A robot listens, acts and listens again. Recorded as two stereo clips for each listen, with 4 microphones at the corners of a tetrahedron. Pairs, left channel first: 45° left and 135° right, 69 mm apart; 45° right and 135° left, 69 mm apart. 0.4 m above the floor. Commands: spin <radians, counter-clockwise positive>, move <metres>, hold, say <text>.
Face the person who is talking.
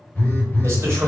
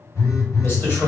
spin -1.66
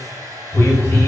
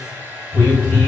hold
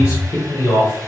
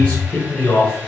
spin 0.35
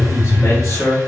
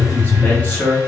spin 0.26
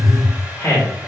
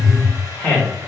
spin 0.17
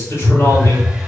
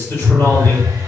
say Found it: a man speaking, straight ahead.